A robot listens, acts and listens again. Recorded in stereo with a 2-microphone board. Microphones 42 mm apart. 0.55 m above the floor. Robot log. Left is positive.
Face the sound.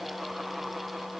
cmd idle
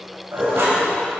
note: The dishes clattering: about 70° right or 110° right.
cmd yaw -70
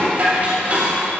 note: So it is at 35° right.
cmd yaw -35
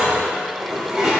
note: The dishes clattering is now 10° right.
cmd yaw -10
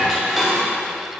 end: Facing the dishes clattering.